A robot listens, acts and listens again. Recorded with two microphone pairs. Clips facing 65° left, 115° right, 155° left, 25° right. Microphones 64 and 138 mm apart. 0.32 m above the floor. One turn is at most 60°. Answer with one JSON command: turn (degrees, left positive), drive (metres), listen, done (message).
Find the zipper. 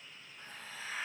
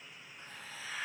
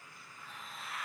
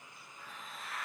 {"listen": true}
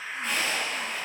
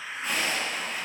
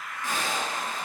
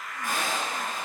{"turn": -35}
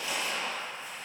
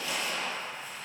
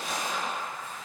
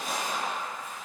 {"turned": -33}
{"done": "Facing the zipper."}